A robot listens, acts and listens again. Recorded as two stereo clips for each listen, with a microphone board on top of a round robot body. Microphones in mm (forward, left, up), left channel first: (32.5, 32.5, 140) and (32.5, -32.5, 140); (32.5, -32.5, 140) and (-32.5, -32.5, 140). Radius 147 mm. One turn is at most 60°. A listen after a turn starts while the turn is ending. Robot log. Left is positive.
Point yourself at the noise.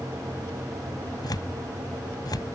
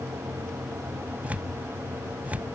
note: The tearing paper: 110° left.
cmd yaw +60
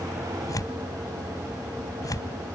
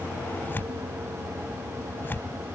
note: The tearing paper is now 60° left.
cmd yaw +60
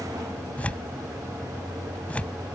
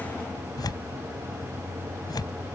note: The tearing paper is now 20° left.
cmd yaw +20
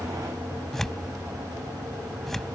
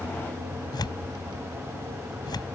end: Facing the tearing paper.